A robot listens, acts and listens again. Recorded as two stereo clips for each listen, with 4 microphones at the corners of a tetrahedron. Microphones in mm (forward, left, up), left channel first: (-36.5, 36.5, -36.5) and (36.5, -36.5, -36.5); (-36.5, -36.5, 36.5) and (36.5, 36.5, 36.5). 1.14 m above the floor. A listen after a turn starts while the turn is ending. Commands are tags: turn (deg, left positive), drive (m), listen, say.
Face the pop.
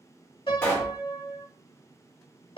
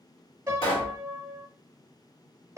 <turn deg="-155"/>
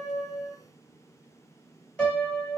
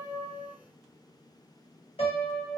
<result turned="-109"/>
<turn deg="-50"/>
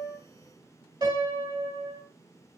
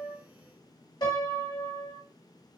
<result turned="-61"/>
<turn deg="15"/>
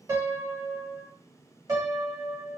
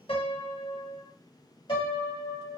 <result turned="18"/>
<say>Facing where the pop came from. I can't hear it now.</say>